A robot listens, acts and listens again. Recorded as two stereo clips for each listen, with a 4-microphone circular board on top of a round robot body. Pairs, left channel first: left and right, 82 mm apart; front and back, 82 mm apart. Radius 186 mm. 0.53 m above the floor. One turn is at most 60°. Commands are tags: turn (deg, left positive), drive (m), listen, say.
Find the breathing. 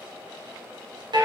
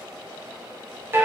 <listen/>
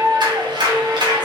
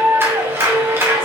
<listen/>
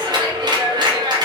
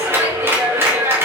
<say>I can't make out breathing, only a clap.</say>